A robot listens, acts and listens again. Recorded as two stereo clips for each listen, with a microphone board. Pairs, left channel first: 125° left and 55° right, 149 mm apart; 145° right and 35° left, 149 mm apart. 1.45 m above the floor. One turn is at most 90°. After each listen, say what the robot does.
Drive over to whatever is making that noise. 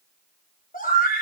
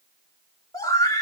Turn 90° left.
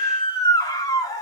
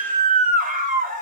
Turn 60° left.
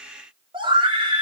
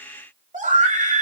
Drive 1.0 m forward.
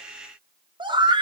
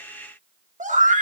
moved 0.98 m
Drive 1.0 m forward.
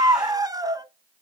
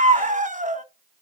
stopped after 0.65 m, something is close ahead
Turn 10° left.
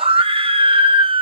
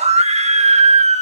I am next to the scream.